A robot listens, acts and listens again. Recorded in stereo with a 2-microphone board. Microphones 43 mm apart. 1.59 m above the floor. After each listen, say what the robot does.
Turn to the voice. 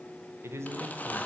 Turn 75° right.
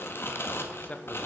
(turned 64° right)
Turn 35° left.
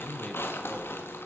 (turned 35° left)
Turn 25° left.
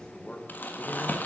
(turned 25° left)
Turn 25° left.
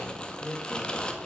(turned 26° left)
Found it: a man speaking, straight ahead.